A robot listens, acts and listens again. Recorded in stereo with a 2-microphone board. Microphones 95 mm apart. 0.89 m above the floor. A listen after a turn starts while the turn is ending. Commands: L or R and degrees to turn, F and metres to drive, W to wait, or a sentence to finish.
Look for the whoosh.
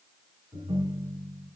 W
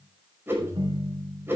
R25
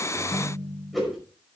Facing the whoosh, over 4 m away.